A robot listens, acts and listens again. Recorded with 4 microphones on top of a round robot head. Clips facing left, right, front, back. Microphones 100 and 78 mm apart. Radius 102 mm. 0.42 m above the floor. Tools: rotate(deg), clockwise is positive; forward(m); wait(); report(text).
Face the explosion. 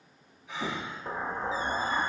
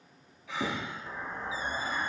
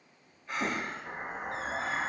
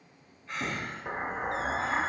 rotate(-125)
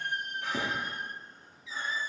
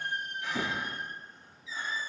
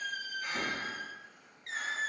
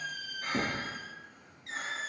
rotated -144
rotate(20)
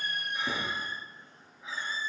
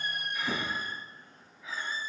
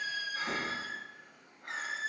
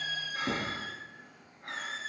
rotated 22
report("I heard an explosion from this way, but can't make it out now.")